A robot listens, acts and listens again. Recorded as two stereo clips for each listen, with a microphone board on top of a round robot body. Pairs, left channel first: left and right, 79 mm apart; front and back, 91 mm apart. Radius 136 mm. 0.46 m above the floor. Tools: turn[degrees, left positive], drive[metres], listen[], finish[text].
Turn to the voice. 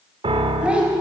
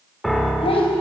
Thought: The child speaking: 15° right.
Action: turn[-15]
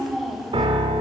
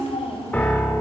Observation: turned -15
Action: finish[Found it: a child speaking, straight ahead, 2 to 4 m away.]